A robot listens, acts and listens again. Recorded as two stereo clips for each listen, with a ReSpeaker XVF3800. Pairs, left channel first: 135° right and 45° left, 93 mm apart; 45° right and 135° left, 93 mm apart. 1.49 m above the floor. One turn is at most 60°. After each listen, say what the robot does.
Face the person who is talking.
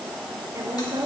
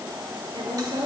Turn 60° left.
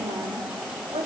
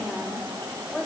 Turn 45° left.
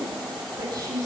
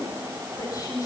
Found it: a woman speaking, straight ahead, 2 to 4 m away.